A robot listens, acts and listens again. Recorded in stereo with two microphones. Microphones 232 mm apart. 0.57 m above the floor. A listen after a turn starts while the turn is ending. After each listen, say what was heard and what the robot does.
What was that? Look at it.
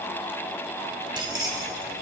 Turn 30° right.
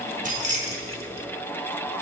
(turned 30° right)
The keys jangling: about 30° right or 150° right. Turn 30° right.
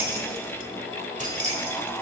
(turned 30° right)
So it is at 150° right. Turn 150° right.
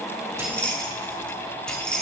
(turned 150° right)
Facing the keys jangling.